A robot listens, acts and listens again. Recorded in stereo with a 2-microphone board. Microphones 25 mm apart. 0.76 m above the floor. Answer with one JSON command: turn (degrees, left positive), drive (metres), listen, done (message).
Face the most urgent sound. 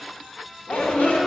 {"turn": 70}
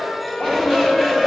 {"turn": 25}
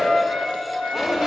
{"done": "Found it: a shout, straight ahead."}